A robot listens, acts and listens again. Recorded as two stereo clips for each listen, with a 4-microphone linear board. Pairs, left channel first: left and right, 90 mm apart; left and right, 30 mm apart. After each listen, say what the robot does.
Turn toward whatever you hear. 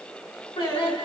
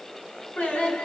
Turn 90° left.
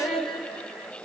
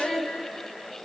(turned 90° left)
Turn 10° right.
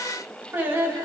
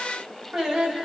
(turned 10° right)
Turn 30° right.
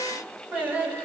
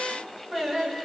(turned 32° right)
Turn 25° right.
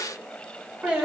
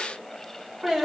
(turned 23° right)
Turn 15° right.
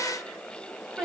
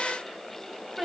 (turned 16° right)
Facing the singing, 1 to 2 m away.